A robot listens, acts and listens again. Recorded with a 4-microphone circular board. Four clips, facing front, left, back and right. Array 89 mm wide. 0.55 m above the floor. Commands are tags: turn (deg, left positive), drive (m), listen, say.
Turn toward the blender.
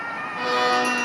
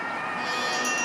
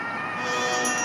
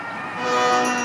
<turn deg="-65"/>
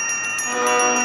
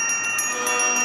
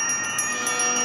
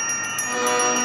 <listen/>
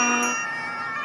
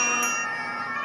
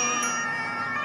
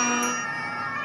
<listen/>
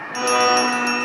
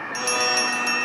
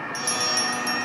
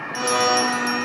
<turn deg="-15"/>
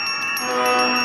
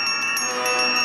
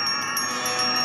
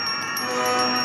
<say>Facing the blender, under 1 m away.</say>